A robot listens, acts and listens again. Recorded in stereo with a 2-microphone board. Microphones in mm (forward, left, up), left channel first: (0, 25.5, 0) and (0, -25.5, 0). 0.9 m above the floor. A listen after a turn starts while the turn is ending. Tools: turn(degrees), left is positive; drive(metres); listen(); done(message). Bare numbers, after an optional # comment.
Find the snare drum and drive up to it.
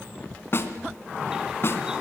# The snare drum: about 50° left or 130° left.
turn(50)
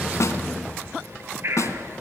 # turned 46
# So it is at 80° left.
turn(80)
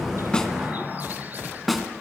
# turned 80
drive(1.0)
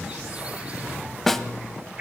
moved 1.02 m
drive(1.0)
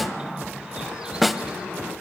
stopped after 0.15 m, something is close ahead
done("I am next to the snare drum.")